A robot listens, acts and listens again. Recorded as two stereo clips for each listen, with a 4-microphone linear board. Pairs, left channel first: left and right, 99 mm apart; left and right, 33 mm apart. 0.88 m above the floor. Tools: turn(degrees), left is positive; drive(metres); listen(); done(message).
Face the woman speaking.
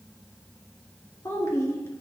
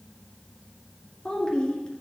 turn(degrees=30)
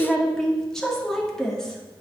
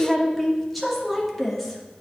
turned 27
done("Facing the woman speaking.")